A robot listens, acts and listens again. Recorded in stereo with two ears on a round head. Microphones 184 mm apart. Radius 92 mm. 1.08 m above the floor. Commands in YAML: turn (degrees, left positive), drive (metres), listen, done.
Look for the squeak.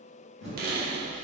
turn: -50
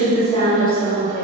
listen: true
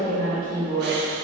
listen: true
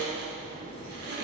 done: "I heard a squeak, but can't make it out now. It was about straight ahead or 80° right."